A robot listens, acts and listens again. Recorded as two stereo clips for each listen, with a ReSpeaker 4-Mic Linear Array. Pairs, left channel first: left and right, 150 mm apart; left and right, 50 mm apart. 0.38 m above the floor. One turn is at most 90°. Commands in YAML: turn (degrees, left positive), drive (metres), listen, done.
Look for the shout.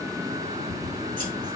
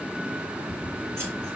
listen: true
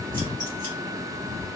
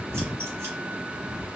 listen: true
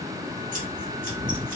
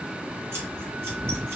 done: "I can't make out a shout to turn to."